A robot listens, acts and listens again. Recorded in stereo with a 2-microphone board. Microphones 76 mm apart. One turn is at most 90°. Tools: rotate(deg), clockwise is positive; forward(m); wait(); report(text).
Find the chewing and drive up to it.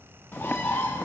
wait()
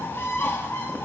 wait()
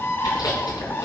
rotate(-60)
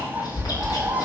rotate(-55)
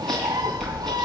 forward(1.0)
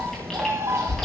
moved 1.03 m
forward(1.0)
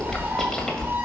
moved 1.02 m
forward(1.0)
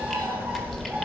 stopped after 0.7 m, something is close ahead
report("I am next to the chewing.")